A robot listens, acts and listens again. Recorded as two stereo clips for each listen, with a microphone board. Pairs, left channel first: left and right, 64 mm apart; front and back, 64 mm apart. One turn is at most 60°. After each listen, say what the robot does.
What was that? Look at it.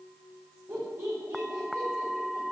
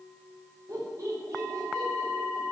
Turn 60° right.
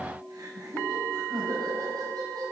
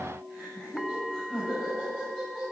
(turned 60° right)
Turn 60° right.
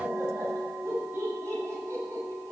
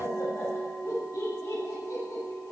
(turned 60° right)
Turn 30° right.
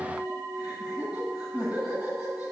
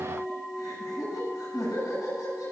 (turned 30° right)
Facing the laughter, over 4 m away.